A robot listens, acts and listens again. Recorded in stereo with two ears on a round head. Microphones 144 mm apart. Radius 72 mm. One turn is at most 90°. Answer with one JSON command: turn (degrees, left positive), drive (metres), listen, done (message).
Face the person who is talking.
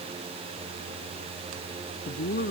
{"turn": 60}
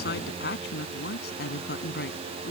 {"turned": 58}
{"turn": 65}
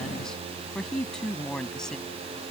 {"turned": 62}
{"done": "Found it: a woman speaking, straight ahead."}